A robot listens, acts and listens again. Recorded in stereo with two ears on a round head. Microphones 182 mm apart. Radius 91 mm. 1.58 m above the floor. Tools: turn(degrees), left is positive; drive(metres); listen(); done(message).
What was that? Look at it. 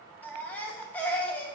turn(degrees=30)
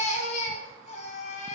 turn(degrees=140)
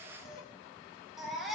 done("Facing the baby crying.")